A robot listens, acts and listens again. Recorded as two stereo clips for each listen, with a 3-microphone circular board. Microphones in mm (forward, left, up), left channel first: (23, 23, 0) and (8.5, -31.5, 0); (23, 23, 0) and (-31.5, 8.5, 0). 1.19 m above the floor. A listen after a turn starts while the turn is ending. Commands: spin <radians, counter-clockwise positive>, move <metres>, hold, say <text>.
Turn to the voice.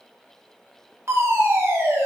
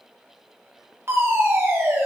hold
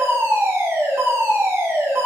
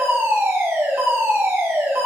hold
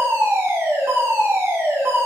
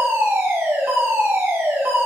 say I can't make out anyone speaking, only a fire alarm.